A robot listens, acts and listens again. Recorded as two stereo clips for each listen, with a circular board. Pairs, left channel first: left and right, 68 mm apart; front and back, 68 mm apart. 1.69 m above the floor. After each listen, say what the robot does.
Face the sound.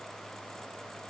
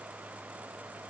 Keep listening.
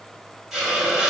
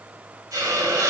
Turn 175° right.
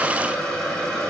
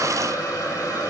Turn 15° left.
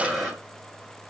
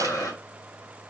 Found it: a hiss, straight ahead, 1 to 2 m away.